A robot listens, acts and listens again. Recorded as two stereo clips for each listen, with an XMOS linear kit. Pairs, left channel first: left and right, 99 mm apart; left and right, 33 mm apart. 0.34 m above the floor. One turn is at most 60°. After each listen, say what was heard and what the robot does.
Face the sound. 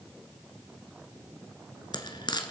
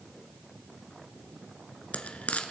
The frying: about 50° left or 130° left. Turn 50° left.
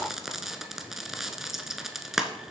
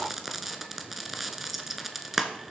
Found it: frying, straight ahead, 1 to 2 m away.